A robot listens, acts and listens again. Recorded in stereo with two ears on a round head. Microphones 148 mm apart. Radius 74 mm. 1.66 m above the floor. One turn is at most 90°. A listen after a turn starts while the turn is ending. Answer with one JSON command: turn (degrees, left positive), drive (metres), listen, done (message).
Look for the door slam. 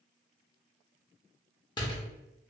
{"turn": 25}
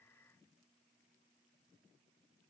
{"listen": true}
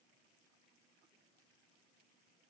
{"done": "I heard a door slam, but can't make it out now. It was about straight ahead or 130° left."}